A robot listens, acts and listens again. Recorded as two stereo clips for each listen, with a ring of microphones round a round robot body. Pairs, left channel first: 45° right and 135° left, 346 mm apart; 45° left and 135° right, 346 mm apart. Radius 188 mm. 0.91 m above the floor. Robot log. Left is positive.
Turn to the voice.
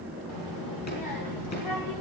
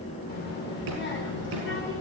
note: The child speaking: 10° right.
cmd yaw -10
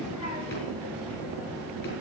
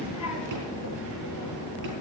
end: Facing the child speaking.